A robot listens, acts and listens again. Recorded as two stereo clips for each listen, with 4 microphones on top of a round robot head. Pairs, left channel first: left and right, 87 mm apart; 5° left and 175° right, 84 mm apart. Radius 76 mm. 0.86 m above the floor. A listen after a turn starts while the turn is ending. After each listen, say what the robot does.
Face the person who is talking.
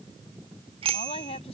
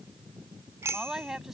Turn 105° left.
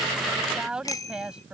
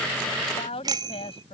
Turn 10° right.
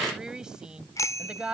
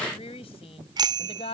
Turn 10° right.
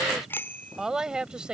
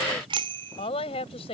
Turn 10° right.
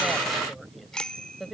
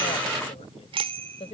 Found it: a woman speaking, straight ahead.